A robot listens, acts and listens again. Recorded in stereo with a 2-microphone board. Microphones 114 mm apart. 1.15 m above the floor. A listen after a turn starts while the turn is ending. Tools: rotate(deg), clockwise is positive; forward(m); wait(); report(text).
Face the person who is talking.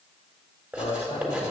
rotate(-65)
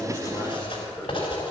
wait()
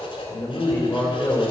rotate(-25)
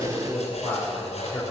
rotate(-10)
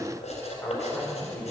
rotate(-10)
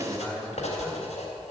report("Found it: a man speaking, straight ahead.")